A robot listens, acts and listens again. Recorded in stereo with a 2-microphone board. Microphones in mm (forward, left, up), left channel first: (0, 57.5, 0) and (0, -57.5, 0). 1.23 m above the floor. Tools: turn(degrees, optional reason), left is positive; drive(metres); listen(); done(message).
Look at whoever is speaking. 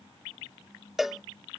listen()
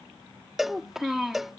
turn(degrees=-30)
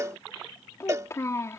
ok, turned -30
turn(degrees=30, reason="So it is at 30° left.")
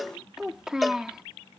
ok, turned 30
done("Facing the child speaking.")